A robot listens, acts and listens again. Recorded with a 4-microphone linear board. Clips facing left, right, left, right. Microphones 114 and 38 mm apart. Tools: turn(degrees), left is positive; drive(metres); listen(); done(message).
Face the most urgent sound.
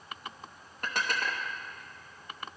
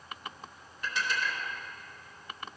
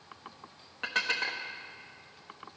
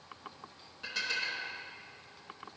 listen()
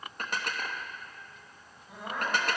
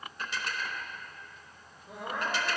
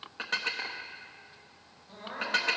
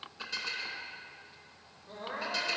turn(degrees=-70)
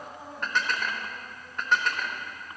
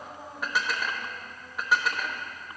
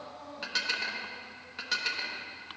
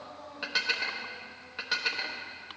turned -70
done("Found it: crying, straight ahead, 2 to 4 m away.")